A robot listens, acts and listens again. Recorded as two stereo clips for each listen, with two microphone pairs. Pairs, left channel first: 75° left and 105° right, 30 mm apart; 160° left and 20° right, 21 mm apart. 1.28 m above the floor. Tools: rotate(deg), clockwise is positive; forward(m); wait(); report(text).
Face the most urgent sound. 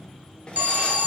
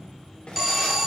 rotate(95)
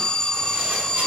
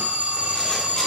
rotate(-10)
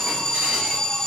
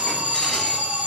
report("Facing the alarm.")